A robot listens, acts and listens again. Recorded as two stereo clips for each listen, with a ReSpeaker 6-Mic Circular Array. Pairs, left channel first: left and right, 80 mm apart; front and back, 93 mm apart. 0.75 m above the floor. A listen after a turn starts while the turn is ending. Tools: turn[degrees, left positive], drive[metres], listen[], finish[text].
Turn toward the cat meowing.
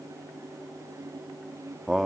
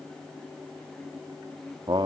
Action: listen[]
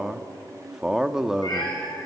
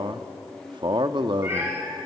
Thought: The cat meowing: 115° left.
Action: turn[115]
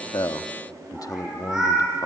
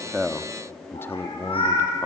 Thought: The cat meowing is now 10° right.
Action: turn[-10]
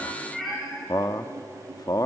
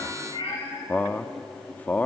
Action: finish[Found it: a cat meowing, straight ahead.]